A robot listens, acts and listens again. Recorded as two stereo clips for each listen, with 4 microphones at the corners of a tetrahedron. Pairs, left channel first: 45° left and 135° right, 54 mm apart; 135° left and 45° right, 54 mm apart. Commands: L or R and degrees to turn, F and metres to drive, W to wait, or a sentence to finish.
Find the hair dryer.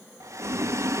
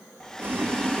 R145
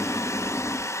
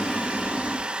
L25
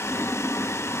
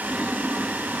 W
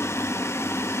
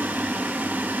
W
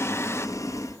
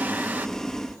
I heard a hair dryer from this way, but can't make it out now.